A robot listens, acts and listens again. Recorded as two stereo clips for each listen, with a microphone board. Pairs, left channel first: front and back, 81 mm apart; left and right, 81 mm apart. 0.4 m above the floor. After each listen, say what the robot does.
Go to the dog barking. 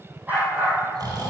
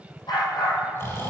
Turn 115° left.
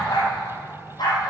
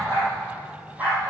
Turn 20° right.
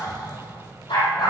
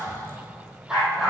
Drive 1.0 m forward.
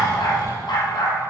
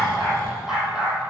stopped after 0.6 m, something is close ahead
Blocked. The dog barking is further on, straight ahead.